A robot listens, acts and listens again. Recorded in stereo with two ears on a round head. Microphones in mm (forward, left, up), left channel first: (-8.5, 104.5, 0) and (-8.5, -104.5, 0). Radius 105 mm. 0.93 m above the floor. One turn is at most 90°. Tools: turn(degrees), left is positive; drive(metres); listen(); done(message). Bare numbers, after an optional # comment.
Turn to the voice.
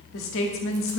# The woman speaking: about 60° left or 120° left.
turn(60)
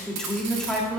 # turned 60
done("Found it: a woman speaking, straight ahead, 1 to 2 m away.")